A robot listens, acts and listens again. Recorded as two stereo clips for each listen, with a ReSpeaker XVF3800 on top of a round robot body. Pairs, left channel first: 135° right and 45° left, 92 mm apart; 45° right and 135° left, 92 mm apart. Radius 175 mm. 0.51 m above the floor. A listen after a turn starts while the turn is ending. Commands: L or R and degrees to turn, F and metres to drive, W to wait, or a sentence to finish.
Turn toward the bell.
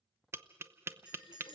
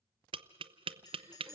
Facing the bell.